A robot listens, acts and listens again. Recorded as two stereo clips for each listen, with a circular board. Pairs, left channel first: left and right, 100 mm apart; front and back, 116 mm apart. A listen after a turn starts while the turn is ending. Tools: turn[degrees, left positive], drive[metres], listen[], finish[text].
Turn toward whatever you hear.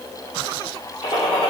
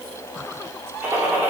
Thought: The gunshot: 110° left.
Action: turn[110]
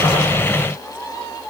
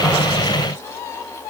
Action: finish[Facing where the gunshot came from. I can't hear it now.]